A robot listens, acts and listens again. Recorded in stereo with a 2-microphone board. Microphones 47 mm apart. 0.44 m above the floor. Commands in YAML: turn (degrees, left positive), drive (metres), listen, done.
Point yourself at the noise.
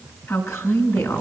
turn: 90
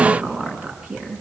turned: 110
turn: -25
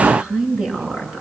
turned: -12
turn: -15
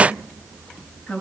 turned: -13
done: "Facing the woman speaking, over 4 m away."